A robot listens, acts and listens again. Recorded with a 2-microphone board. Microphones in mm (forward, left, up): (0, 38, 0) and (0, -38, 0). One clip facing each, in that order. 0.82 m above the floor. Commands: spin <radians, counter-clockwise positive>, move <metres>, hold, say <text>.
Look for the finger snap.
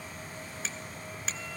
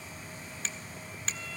spin 0.52
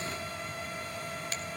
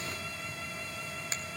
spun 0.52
hold
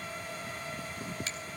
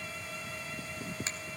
spin -0.44
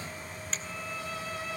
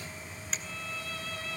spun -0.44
say Facing the finger snap.